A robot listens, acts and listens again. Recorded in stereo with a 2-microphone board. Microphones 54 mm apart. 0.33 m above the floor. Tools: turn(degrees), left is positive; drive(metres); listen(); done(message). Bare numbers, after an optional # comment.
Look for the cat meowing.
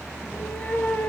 # The cat meowing: about 30° left or 150° left.
turn(30)
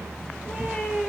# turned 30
done("Found it: a cat meowing, straight ahead.")